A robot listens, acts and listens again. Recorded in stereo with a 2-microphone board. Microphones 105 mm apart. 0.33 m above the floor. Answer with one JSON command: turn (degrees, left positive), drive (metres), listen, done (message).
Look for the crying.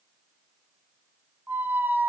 {"listen": true}
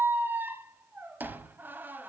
{"listen": true}
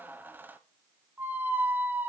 {"done": "I can't make out crying to turn to."}